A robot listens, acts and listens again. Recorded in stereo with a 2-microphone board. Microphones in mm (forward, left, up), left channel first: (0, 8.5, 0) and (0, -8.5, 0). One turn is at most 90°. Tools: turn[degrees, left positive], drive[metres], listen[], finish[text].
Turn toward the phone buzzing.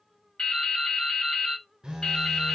Thought: The phone buzzing: about 55° right or 125° right.
Action: turn[-55]
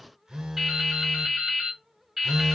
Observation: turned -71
Thought: So it is at 45° right.
Action: turn[-45]
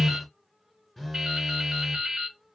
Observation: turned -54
Thought: The phone buzzing is now 10° left.
Action: turn[10]
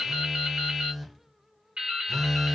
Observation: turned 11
Action: finish[Found it: a phone buzzing, straight ahead.]